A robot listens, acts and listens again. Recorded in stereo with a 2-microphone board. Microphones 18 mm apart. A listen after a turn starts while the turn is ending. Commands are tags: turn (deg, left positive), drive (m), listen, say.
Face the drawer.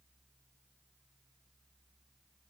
<listen/>
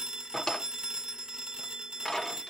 <turn deg="30"/>
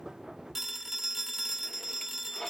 <turn deg="120"/>
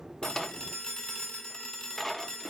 <turn deg="15"/>
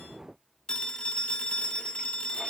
<listen/>
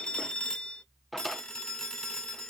<say>Facing the drawer.</say>